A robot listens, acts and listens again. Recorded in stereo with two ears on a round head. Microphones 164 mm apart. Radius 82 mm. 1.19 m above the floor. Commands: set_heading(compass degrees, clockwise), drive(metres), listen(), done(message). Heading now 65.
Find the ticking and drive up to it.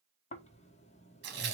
listen()
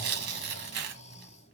listen()
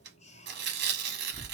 done("I can't make out ticking to turn to.")